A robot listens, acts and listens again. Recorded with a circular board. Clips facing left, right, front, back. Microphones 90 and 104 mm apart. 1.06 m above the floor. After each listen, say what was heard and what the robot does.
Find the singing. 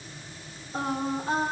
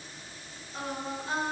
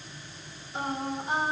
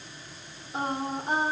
The singing: 145° left. Turn 145° left.
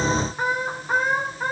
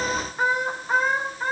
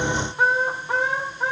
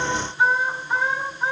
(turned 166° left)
The singing is now 15° left. Turn 15° left.
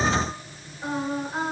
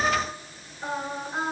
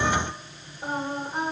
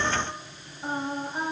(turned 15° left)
The singing is now 10° left. Turn 10° left.
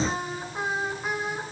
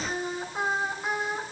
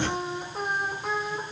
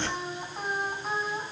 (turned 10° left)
Facing the singing, 2 to 4 m away.